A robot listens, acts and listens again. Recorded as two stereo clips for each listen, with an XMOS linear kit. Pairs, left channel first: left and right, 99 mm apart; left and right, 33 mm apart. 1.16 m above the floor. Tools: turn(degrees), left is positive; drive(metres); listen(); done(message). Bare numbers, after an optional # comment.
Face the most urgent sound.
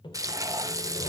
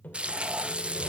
listen()
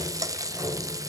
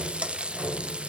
listen()
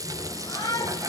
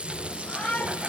# The shout: about 40° left or 140° left.
turn(40)
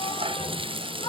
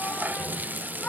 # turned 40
# So it is at 100° left.
turn(100)
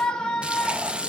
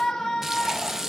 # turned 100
# The shout is now 10° left.
turn(10)
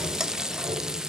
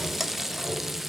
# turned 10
listen()
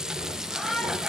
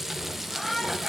done("Found it: a shout, straight ahead.")